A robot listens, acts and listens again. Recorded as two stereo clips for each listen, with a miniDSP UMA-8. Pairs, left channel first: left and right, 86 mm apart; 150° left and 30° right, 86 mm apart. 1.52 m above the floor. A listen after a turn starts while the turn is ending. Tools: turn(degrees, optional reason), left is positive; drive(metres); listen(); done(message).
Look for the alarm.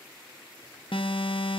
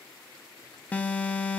turn(degrees=75, reason="The alarm: 75° left.")
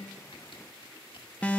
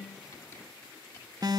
turn(degrees=15, reason="The alarm is now 15° left.")
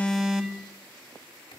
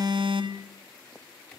done("Found it: an alarm, straight ahead, 1 to 2 m away.")